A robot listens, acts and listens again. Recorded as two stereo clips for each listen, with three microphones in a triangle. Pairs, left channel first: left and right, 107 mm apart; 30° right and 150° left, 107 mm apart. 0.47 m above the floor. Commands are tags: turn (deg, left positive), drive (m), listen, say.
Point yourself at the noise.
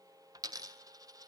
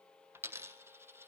<turn deg="-145"/>
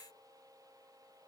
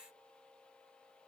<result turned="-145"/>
<say>I heard a dropped coin from this way, but can't make it out now.</say>